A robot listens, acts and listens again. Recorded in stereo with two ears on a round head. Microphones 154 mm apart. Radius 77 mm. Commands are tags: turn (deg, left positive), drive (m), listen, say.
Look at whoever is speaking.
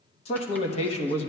<turn deg="35"/>
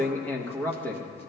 <turn deg="10"/>
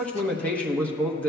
<turn deg="10"/>
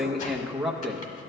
<say>Found it: a man speaking, straight ahead, under 1 m away.</say>